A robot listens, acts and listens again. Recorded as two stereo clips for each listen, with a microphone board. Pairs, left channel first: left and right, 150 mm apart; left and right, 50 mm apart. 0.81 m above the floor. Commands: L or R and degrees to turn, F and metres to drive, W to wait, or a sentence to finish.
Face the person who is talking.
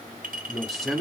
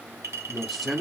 L30
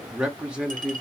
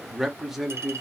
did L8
R30
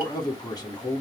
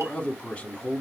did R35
L30
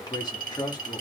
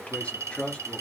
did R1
L30
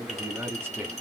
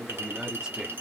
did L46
R15
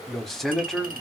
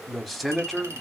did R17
Facing the man speaking, 1 to 2 m away.